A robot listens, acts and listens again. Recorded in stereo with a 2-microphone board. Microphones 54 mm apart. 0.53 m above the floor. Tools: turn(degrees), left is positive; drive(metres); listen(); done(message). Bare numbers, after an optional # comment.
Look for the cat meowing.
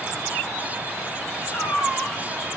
# The cat meowing: about 50° left or 130° left.
turn(50)
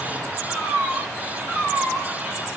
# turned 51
# So it is at 20° left.
turn(20)
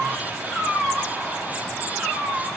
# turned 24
done("Found it: a cat meowing, straight ahead.")